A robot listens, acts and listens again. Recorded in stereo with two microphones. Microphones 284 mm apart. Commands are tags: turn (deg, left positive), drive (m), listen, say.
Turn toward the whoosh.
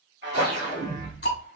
<turn deg="-70"/>
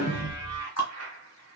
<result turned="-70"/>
<turn deg="-10"/>
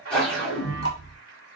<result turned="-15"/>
<say>Facing the whoosh.</say>